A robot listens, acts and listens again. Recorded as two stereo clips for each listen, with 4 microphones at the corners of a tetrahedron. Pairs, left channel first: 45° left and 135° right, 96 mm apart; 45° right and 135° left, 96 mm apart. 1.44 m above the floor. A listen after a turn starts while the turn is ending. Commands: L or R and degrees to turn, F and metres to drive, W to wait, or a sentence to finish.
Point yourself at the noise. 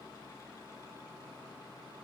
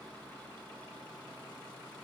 W
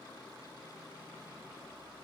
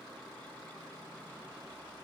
W
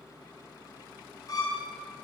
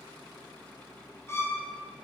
L10
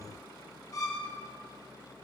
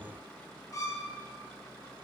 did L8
Facing the violin, 1 to 2 m away.